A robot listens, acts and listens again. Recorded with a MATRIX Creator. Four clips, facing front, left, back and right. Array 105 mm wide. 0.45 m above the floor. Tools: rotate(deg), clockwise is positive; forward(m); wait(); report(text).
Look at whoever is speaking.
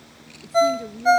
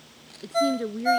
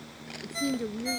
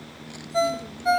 rotate(-100)
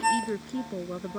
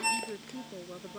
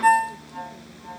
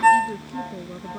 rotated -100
rotate(15)
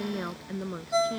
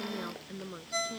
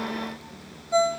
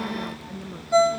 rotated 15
report("Found it: a woman speaking, straight ahead.")